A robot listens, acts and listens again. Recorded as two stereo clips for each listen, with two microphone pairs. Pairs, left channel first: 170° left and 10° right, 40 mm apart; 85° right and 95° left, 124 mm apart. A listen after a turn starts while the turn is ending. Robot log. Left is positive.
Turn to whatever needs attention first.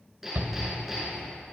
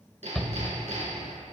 end: Facing the shout, 1 to 2 m away.